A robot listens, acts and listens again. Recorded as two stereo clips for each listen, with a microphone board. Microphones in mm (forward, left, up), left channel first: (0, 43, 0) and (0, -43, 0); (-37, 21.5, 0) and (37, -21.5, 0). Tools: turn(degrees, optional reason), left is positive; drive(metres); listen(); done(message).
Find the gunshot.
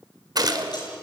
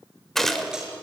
turn(degrees=-125, reason="The gunshot: 125° right.")
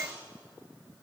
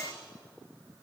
done("I heard a gunshot from this way, but can't make it out now.")